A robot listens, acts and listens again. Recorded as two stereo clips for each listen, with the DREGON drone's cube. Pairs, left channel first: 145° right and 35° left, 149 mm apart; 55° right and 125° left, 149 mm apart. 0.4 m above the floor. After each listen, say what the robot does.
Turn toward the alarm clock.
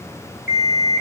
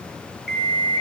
Turn 145° right.
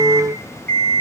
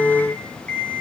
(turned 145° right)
Turn 25° left.
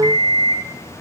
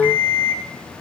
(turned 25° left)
Turn 20° right.
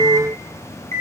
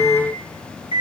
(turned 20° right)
Facing the alarm clock, over 4 m away.